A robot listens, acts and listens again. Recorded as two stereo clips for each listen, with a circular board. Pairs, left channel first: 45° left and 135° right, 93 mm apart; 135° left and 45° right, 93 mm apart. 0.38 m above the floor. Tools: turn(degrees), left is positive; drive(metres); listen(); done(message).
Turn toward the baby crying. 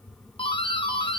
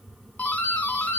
listen()
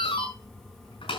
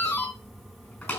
listen()
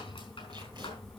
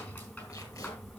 done("I can't make out a baby crying to turn to.")